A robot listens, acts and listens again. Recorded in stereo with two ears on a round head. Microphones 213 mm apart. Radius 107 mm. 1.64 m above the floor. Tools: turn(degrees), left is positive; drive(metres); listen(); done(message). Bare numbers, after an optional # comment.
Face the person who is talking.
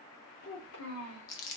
# The child speaking: about 65° left or 115° left.
turn(65)
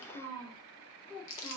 # So it is at 20° left.
turn(20)
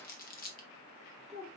done("Found it: a child speaking, straight ahead.")